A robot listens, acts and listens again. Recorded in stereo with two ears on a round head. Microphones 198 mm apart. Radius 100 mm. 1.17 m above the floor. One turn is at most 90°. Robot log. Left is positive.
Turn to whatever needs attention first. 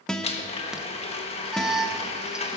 cmd yaw -30
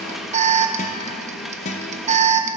note: So it is at 150° right.
cmd yaw -90
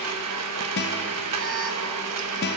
note: Nothing new. It was at 60° right.
cmd yaw -60
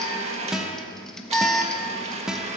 end: Found it: an alarm, straight ahead.